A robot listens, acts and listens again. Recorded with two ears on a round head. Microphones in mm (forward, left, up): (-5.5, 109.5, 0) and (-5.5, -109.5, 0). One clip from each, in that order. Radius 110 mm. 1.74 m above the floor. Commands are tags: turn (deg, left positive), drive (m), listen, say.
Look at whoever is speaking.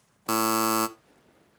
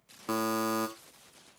<listen/>
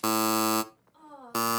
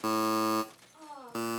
<turn deg="-15"/>
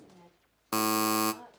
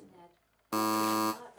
<turn deg="-145"/>
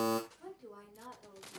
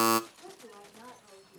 <say>Found it: a woman speaking, straight ahead.</say>